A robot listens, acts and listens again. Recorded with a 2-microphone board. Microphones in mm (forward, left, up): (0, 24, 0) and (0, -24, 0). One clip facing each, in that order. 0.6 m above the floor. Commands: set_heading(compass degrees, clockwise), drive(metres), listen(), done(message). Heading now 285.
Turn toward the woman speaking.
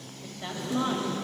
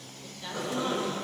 set_heading(250)
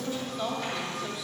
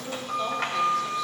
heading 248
set_heading(238)
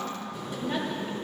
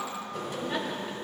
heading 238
done("Facing the woman speaking.")